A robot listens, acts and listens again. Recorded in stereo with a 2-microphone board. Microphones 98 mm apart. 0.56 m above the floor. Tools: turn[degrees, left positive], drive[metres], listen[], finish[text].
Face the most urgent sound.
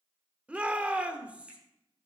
Action: turn[-30]
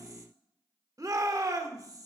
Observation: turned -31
Thought: So it is at 135° right.
Action: turn[-135]
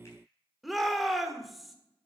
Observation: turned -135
Action: finish[Found it: a shout, straight ahead, 1 to 2 m away.]